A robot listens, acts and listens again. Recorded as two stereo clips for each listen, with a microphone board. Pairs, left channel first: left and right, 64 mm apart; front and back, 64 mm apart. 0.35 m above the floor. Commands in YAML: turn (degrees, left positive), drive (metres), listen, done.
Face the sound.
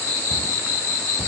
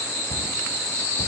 turn: -25
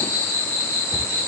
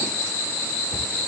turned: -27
done: "Found it: a cupboard door, straight ahead, 1 to 2 m away."